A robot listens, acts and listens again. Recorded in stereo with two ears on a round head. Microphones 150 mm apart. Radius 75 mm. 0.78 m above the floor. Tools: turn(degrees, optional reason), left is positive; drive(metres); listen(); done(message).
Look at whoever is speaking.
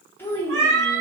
turn(degrees=30)
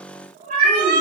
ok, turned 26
listen()
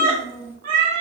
turn(degrees=-15, reason="So it is at 15° right.")
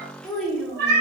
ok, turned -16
done("Found it: a child speaking, straight ahead.")